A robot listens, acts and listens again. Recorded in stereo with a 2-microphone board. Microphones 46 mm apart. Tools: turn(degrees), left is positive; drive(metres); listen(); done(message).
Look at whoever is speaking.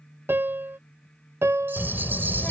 turn(degrees=25)
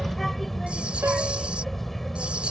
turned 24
done("Found it: a child speaking, straight ahead.")